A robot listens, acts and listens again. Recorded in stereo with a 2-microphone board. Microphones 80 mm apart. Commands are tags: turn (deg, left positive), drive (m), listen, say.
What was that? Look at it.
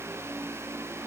<listen/>
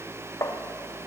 <turn deg="40"/>
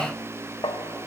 <turn deg="95"/>
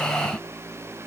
<listen/>
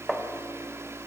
<say>Facing the tapping, 1 to 2 m away.</say>